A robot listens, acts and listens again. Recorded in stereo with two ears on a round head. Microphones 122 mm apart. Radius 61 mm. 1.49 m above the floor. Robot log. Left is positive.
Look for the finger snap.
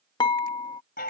cmd idle
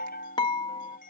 cmd idle
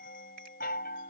end: I can't make out a finger snap, only a chime and dishes clattering.